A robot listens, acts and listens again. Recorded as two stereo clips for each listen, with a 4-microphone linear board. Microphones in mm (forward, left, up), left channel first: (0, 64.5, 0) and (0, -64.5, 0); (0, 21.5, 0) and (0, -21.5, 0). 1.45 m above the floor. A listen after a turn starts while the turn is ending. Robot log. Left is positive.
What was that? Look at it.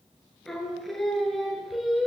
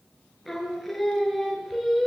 cmd yaw -30
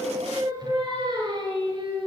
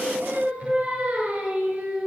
note: So it is at 140° right.
cmd yaw -140
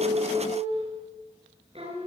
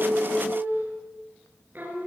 note: The singing is now 50° right.
cmd yaw -50
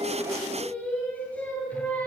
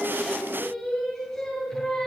note: The singing is now 10° left.
cmd yaw +10
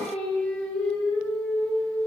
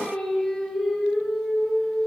note: The singing is now 10° left.
cmd yaw +10
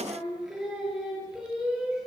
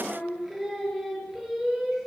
end: Facing the singing.